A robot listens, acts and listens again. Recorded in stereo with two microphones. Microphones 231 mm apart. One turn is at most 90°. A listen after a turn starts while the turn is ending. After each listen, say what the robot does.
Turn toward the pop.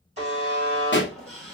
Turn 55° left.
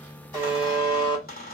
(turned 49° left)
Keep listening.
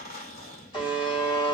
I heard a pop, but can't make it out now. It was about 5° left or 80° left.